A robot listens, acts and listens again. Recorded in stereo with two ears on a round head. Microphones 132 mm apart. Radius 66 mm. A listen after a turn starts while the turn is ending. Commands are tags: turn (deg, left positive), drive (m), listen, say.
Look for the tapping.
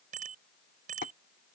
<turn deg="60"/>
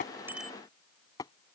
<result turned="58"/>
<turn deg="25"/>
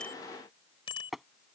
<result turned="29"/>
<say>Facing the tapping.</say>